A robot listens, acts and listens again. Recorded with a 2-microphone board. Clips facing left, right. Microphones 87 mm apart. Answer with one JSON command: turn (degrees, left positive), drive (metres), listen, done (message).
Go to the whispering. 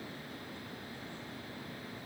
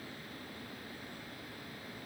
{"listen": true}
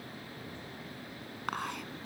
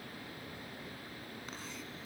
{"turn": 70}
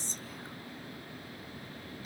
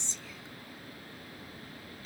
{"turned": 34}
{"turn": 45}
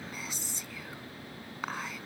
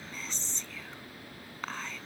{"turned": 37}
{"turn": 10}
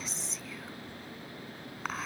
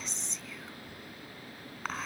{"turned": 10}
{"drive": 1.0}
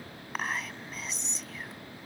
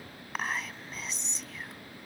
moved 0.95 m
{"drive": 1.0}
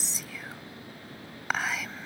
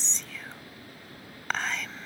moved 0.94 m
{"turn": 10}
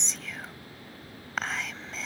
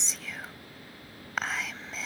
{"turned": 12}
{"drive": 1.0}
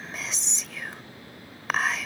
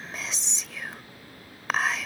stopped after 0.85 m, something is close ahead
{"done": "I am next to the whispering."}